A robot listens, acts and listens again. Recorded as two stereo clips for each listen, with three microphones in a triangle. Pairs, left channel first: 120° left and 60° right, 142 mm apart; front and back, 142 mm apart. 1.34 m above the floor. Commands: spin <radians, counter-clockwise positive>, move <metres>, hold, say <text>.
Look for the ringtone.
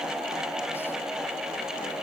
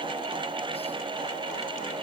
hold
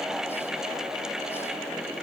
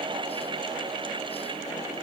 hold
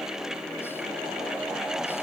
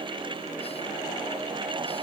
say I can't make out a ringtone to turn to.